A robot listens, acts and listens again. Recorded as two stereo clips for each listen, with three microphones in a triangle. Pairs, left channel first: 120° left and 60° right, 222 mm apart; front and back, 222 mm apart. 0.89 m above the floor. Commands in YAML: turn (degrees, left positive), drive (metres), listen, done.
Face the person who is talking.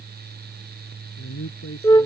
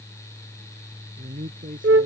turn: 130
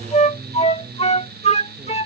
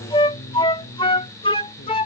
listen: true
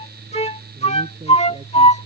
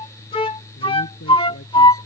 listen: true
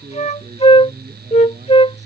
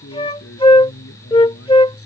done: "Found it: a man speaking, straight ahead."